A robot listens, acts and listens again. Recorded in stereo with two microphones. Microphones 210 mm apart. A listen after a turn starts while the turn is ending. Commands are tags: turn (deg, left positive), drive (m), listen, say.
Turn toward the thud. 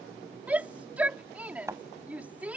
<turn deg="-30"/>
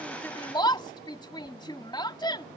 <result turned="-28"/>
<listen/>
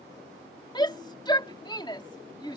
<say>I heard a thud, but can't make it out now. It was about 15° left or 140° right.</say>